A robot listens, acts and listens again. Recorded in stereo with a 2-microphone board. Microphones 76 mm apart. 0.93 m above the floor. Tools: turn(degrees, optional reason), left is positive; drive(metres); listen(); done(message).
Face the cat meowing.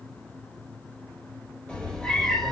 turn(degrees=30)
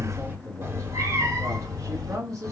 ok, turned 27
turn(degrees=-60, reason="So it is at 60° right.")
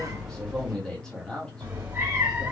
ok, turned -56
turn(degrees=-25, reason="The cat meowing is now 25° right.")
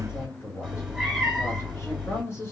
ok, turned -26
done("Found it: a cat meowing, straight ahead, 2 to 4 m away.")